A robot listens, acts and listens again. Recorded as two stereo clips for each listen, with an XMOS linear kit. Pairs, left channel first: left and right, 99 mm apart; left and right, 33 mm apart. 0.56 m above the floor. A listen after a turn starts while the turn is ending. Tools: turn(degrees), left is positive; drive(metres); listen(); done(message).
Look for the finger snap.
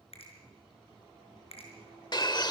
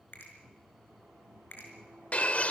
turn(degrees=90)
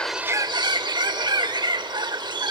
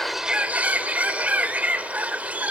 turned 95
listen()
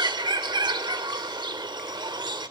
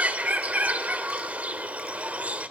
listen()
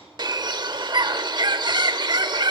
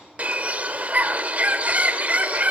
done("I heard a finger snap from this way, but can't make it out now.")